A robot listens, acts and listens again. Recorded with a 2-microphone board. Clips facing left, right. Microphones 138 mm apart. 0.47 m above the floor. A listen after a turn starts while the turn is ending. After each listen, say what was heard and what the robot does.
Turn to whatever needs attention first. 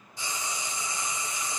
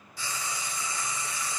Keep listening.
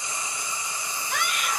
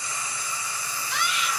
The scream: about 55° left or 125° left. Turn 55° left.
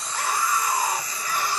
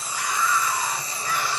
So it is at 55° left. Turn 55° left.
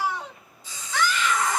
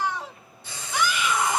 The scream is now 20° right. Turn 20° right.
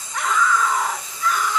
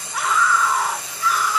Found it: a scream, straight ahead, 1 to 2 m away.